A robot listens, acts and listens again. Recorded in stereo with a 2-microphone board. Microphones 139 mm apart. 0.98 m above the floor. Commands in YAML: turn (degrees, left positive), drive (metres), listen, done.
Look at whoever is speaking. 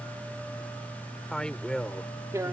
turn: 30
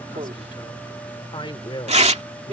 turn: 145
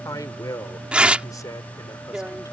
turn: 25
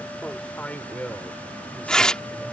turn: 10
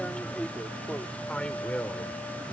turn: 10
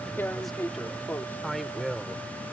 done: "Found it: a man speaking, straight ahead."